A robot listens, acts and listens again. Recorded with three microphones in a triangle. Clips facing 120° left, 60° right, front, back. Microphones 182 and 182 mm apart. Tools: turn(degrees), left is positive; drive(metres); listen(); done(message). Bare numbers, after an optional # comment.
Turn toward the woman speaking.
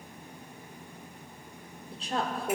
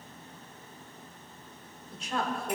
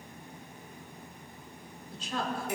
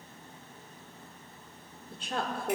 # The woman speaking: 170° left.
turn(170)
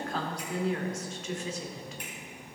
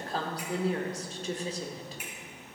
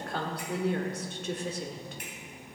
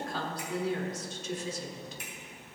# The woman speaking is now 10° right.
turn(-10)
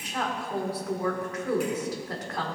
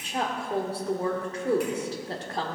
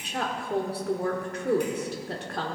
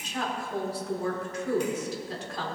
done("Found it: a woman speaking, straight ahead, 1 to 2 m away.")